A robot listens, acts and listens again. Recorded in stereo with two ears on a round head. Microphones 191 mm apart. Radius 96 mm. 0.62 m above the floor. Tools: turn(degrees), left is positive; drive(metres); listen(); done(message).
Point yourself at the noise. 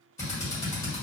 turn(degrees=30)
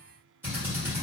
turn(degrees=-10)
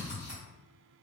done("Facing the drill.")